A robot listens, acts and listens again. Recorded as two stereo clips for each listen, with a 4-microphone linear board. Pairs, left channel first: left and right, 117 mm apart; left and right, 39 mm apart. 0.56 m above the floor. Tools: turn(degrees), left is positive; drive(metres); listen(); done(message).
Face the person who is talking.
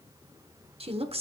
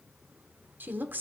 turn(degrees=-55)
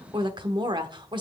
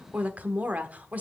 turn(degrees=-50)
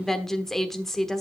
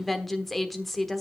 done("Facing the woman speaking.")